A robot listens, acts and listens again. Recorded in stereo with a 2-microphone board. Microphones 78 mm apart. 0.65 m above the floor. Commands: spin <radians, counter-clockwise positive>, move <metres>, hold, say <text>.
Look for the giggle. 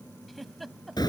spin 0.52
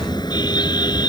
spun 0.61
hold
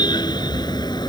hold
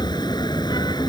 say I heard a giggle, but can't make it out now. It was about 35° right or 145° left.